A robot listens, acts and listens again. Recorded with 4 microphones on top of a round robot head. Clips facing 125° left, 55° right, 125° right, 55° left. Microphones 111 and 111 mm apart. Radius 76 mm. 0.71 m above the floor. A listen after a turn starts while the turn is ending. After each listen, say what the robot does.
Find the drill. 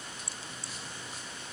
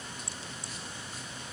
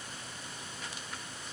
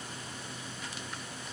Keep listening.
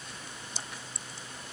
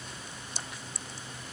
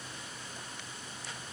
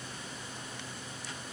Keep listening.
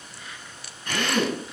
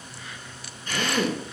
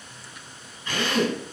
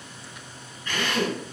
Turn 160° left.
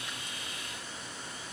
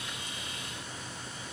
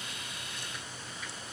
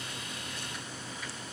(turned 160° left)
Keep listening.
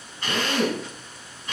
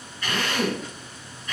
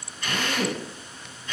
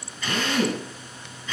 Turn 55° left.
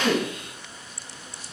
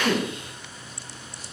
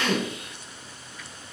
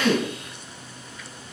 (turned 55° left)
Keep listening.
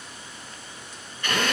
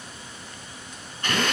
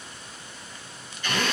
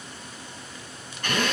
Facing the drill, over 4 m away.